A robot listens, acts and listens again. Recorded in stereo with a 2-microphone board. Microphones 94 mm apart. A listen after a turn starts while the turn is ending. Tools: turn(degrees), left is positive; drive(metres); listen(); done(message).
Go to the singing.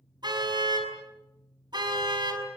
listen()
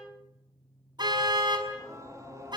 turn(degrees=-35)
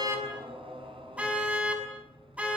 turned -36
turn(degrees=-110)
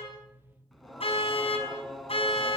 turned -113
drive(metres=1.0)
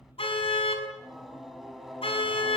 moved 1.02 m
drive(metres=1.0)
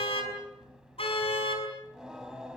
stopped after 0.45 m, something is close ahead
done("Blocked. The singing is further on, straight ahead.")